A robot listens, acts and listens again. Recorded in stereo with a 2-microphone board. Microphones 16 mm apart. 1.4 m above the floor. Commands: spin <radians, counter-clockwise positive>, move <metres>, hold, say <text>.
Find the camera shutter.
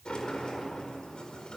hold
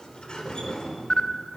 spin 1.13
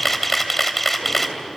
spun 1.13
spin 0.17
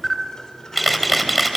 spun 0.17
say Found it: a camera shutter, straight ahead.